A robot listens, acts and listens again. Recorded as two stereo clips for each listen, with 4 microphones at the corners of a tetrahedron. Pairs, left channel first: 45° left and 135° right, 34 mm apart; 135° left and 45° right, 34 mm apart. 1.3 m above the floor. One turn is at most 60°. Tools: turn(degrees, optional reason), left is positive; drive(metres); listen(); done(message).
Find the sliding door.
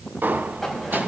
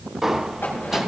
turn(degrees=-60, reason="The sliding door: 125° right.")
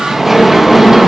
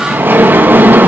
turn(degrees=-50, reason="The sliding door is now 50° right.")
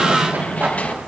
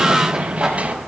done("Found it: a sliding door, straight ahead, 1 to 2 m away.")